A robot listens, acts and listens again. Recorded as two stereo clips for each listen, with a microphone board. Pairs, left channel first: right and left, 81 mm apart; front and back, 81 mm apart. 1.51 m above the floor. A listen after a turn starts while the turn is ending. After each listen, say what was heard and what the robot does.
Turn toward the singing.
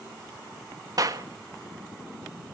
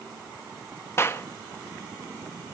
Keep listening.
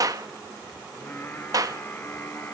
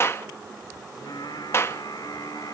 The singing: 35° right. Turn 35° right.
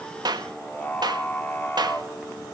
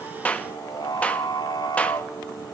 The singing is now 25° right. Turn 25° right.
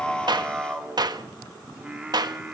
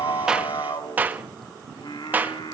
The singing is now 15° left. Turn 15° left.
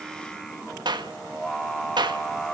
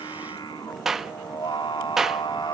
Facing the singing.